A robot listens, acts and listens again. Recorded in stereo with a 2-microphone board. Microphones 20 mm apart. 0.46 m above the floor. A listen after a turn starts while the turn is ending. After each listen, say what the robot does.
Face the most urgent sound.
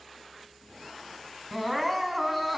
Turn 30° left.
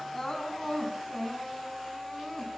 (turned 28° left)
Turn 150° left.
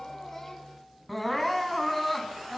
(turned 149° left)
Found it: crying, straight ahead, over 4 m away.